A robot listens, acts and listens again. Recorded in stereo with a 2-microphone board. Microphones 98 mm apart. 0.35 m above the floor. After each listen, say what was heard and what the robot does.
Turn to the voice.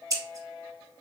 Keep listening.
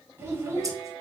The child speaking: about 25° right or 155° right. Turn 25° right.
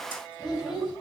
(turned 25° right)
Facing the child speaking.